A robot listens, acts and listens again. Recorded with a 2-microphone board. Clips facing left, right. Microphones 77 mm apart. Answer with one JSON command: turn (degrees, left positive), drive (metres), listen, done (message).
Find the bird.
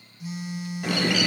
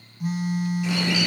{"turn": 60}
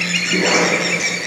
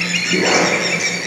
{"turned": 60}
{"done": "Facing the bird."}